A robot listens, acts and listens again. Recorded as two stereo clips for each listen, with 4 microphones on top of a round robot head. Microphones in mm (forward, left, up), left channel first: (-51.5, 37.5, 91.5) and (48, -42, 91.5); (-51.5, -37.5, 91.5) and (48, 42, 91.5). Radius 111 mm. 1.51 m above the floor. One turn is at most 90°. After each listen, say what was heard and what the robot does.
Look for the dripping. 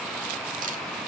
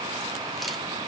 Keep listening.
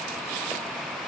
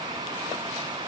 Keep listening.
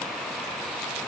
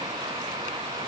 I can't make out dripping to turn to.